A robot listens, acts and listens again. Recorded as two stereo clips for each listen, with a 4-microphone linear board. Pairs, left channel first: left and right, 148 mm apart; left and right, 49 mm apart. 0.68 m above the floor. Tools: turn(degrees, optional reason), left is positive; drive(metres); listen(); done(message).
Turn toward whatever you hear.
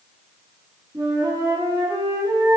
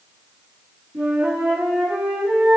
turn(degrees=-25, reason="The flute: about 25° right or 155° right.")
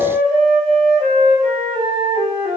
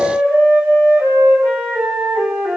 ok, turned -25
turn(degrees=-130, reason="So it is at 130° right.")
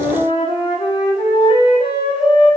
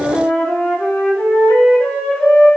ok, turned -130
turn(degrees=35, reason="The flute is now 35° left.")
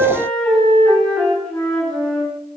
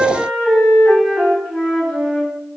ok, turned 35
turn(degrees=10, reason="The flute is now 10° left.")
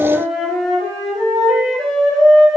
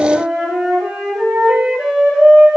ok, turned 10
done("Found it: a flute, straight ahead.")